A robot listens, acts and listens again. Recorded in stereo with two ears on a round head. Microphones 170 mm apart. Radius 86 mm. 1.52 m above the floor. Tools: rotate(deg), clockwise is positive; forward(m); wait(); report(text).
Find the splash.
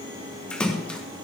rotate(-30)
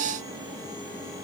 wait()
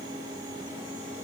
report("I heard a splash, but can't make it out now. It was about 25° right or 145° left.")